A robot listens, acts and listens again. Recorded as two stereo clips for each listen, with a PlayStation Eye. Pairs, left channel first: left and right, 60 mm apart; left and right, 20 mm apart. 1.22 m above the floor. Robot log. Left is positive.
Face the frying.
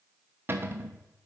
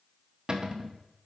cmd idle
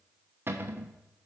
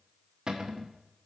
cmd idle
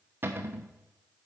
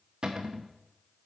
end: I can't make out frying, only a cupboard door.